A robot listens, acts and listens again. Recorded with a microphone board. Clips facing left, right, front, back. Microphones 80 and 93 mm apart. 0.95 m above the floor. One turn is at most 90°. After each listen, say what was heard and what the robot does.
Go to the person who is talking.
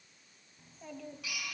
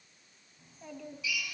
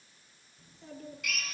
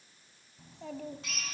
The child speaking: straight behind. Turn 90° left.
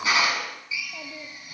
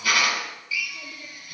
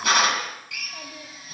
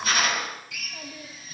The child speaking is now 80° left. Turn 80° left.
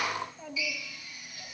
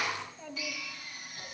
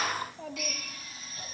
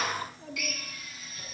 Drive 1.0 m forward.
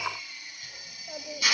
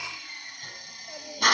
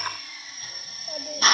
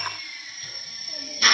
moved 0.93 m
The child speaking is now 15° left. Turn 15° left.
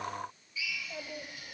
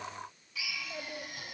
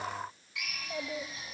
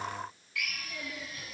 Drive 1.0 m forward.
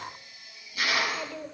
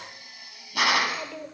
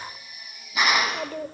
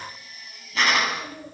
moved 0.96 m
Drive 1.0 m forward.
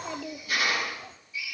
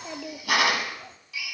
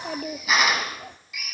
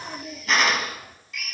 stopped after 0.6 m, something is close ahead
Arrived at the child speaking, straight ahead.